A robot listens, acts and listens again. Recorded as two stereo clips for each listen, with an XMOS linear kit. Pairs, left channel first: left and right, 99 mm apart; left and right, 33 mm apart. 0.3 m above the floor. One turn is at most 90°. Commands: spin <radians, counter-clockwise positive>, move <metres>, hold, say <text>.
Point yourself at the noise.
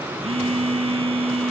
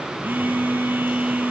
spin -1.57
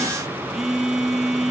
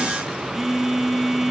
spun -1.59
say Found it: a phone buzzing, straight ahead, 2 to 4 m away.